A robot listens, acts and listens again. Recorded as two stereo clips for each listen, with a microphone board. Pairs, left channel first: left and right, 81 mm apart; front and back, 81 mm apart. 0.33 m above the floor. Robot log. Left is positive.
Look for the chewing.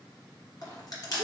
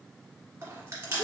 note: The chewing: 125° left.
cmd yaw +125
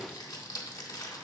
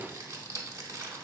cmd idle
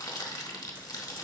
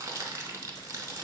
cmd idle
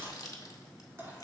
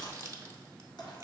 note: The chewing is now 30° right.
cmd yaw -30
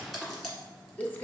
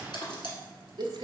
end: Facing the chewing, 1 to 2 m away.